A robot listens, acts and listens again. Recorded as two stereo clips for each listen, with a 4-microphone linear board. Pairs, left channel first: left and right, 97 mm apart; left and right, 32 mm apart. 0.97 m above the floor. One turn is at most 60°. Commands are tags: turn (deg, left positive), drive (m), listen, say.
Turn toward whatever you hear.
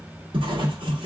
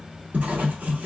<turn deg="-60"/>
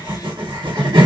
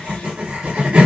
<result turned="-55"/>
<turn deg="-60"/>
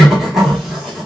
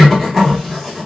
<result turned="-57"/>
<say>Found it: writing, straight ahead.</say>